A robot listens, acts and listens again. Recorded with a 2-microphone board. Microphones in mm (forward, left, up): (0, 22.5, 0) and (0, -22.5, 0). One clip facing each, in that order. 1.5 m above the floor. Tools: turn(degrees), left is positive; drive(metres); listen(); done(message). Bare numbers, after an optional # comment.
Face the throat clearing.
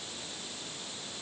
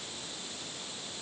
listen()
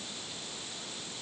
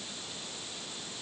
listen()
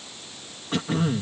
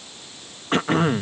# The throat clearing: about 50° right or 130° right.
turn(-50)
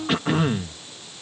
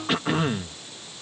done("Found it: throat clearing, straight ahead.")